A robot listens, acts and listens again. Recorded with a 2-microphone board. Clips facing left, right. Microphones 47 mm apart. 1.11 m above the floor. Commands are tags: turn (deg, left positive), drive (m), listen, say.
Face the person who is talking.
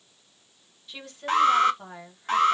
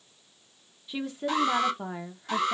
<turn deg="-30"/>
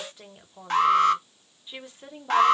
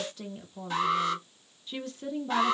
<turn deg="20"/>
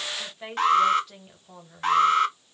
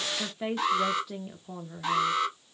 <say>Facing the woman speaking.</say>